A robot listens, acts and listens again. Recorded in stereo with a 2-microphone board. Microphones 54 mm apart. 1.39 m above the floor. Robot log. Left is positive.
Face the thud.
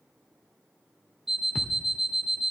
note: The thud: about 30° left or 150° left.
cmd yaw +30
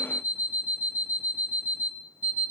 cmd idle
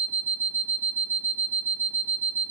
end: I heard a thud, but can't make it out now. It was about straight ahead or 120° left.